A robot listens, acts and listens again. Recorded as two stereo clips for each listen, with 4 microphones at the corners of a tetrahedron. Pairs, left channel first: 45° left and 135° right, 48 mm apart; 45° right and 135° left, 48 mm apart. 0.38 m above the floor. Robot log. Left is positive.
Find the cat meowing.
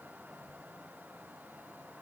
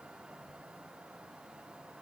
cmd idle
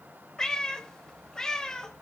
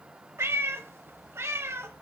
note: The cat meowing: 120° left.
cmd yaw +120
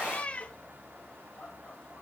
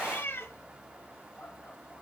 note: The cat meowing is now 15° right.
cmd yaw -15
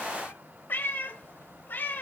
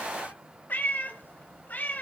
end: Found it: a cat meowing, straight ahead.